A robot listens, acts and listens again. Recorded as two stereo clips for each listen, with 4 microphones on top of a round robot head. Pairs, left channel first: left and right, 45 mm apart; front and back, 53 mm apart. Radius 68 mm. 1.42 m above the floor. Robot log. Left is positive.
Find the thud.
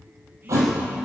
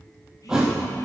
note: The thud: 100° right.
cmd yaw -100
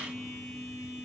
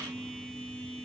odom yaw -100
end: I heard a thud from this way, but can't make it out now.